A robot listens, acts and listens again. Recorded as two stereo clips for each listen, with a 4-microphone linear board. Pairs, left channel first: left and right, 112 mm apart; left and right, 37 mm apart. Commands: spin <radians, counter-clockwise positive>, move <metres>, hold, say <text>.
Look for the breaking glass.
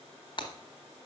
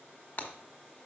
spin 0.79
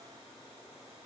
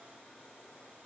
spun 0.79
hold
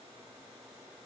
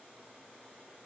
say I heard breaking glass, but can't make it out now. It was about straight ahead or 90° left.